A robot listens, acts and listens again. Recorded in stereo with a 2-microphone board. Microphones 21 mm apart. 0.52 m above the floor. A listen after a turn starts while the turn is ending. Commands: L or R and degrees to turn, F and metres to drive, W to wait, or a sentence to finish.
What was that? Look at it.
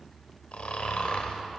L90
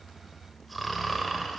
Facing the snoring.